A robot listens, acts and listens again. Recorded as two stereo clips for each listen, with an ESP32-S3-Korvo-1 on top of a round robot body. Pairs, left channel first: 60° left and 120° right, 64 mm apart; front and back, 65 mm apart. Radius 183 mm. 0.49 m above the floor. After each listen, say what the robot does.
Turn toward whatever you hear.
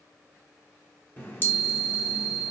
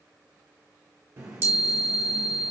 Turn 120° left.
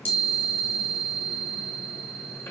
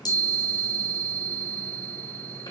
Facing the chime.